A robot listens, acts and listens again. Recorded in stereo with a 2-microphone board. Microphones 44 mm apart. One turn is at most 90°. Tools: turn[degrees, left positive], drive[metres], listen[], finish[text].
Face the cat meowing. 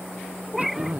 Action: turn[-30]
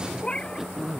Thought: So it is at 20° left.
Action: turn[20]
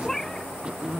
Thought: The cat meowing is now 10° left.
Action: turn[10]
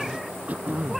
Action: listen[]
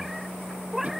Action: finish[Facing the cat meowing.]